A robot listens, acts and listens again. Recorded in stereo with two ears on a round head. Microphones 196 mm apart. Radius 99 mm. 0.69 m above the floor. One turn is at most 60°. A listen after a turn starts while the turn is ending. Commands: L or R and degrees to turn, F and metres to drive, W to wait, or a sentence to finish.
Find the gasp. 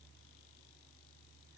W
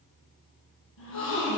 L60
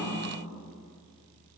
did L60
W
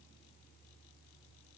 I heard a gasp, but can't make it out now. It was about 5° left or 55° left.